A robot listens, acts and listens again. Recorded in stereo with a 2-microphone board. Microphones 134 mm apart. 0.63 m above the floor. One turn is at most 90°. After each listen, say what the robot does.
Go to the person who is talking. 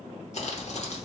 Keep listening.
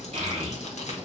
Turn 50° right.
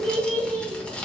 Turn 75° right.
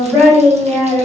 Turn 10° right.
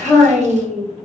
Drive 1.0 m forward.
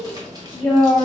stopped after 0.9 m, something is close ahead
Arrived at the child speaking, straight ahead.